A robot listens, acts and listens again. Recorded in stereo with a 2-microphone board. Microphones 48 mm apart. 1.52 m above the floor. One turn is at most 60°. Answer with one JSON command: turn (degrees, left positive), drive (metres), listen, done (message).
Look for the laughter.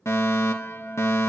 {"listen": true}
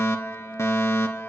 {"listen": true}
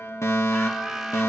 {"turn": -30}
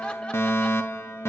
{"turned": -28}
{"listen": true}
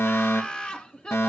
{"turn": 25}
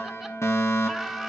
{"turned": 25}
{"done": "Facing the laughter, 1 to 2 m away."}